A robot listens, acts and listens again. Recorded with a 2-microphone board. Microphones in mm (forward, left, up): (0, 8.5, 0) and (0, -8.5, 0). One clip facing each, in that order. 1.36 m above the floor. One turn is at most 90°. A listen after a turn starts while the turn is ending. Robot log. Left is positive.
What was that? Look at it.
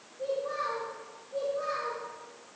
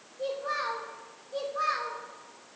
note: The child speaking: about 65° right or 115° right.
cmd yaw -65
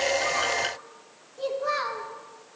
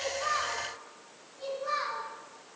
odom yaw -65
note: So it is at 30° left.
cmd yaw +30
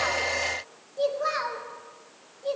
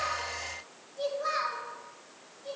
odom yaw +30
note: The child speaking is now 25° left.
cmd yaw +25
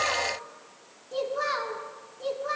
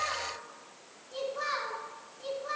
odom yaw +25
note: The child speaking is now 15° left.
cmd yaw +15
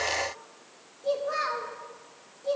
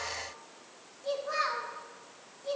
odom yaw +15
end: Found it: a child speaking, straight ahead, 2 to 4 m away.